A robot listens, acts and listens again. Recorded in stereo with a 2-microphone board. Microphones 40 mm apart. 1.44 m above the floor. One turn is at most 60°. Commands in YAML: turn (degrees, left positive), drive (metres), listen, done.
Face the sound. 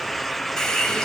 turn: 30
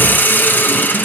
turn: 60
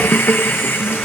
turn: 60
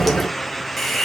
done: "Facing the hiss, 1 to 2 m away."